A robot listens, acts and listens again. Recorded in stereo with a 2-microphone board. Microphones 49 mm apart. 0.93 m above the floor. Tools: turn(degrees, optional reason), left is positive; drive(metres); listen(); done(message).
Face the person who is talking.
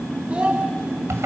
turn(degrees=-25, reason="The child speaking: about 25° right or 155° right.")
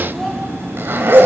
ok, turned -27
listen()
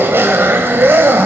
listen()
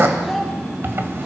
done("Found it: a child speaking, straight ahead, over 4 m away.")